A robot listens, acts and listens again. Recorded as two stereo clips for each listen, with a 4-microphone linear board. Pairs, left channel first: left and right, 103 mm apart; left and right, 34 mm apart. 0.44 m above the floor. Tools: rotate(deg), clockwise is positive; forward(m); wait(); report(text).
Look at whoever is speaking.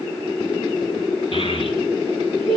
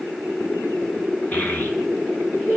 rotate(-70)
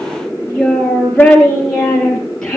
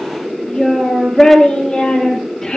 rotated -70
report("Facing the child speaking, over 4 m away.")